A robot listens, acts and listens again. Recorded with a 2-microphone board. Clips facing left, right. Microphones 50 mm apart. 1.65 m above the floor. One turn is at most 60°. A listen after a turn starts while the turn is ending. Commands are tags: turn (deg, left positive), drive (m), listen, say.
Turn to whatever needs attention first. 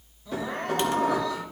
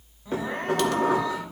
<turn deg="-25"/>
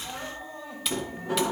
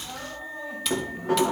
<say>Found it: crying, straight ahead, 2 to 4 m away.</say>